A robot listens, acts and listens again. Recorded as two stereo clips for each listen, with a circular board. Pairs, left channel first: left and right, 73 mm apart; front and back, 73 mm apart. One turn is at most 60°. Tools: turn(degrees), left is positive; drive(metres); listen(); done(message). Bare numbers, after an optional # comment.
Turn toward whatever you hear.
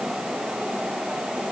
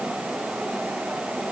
listen()
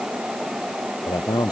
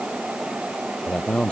# The man speaking: 75° left.
turn(60)
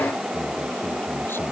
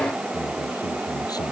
# Nothing new. It was at 15° left.
turn(15)
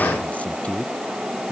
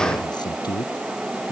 # The man speaking is now 15° left.
turn(15)
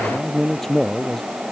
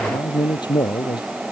done("Found it: a man speaking, straight ahead.")